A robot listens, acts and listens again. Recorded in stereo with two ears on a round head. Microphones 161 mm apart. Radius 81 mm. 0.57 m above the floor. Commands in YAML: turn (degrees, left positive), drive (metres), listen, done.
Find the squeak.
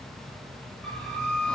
turn: 30
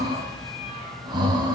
listen: true
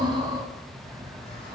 listen: true
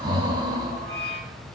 turn: 145
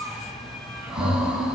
done: "Found it: a squeak, straight ahead."